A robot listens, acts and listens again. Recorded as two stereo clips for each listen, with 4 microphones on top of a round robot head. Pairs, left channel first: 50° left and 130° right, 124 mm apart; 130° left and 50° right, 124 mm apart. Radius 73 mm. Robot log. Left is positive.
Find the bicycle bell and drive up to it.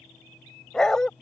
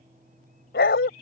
cmd idle
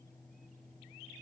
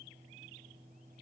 cmd idle
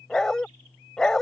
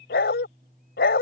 end: I can't make out a bicycle bell to turn to.